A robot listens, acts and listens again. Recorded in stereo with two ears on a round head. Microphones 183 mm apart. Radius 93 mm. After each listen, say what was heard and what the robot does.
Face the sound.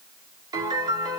The piano: about 20° right or 160° right. Turn 20° right.
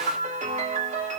So it is at 135° right. Turn 135° right.
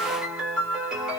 Facing the piano.